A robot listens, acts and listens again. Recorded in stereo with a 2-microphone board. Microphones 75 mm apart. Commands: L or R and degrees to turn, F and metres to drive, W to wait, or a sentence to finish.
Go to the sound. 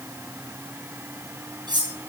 R90
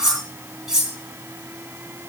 F1.0
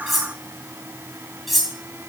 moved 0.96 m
F1.0
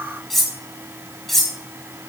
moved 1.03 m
F1.0
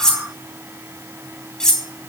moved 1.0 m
L10
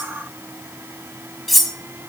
F1.0
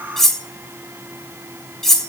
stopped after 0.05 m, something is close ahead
Arrived at the cutlery clinking, straight ahead.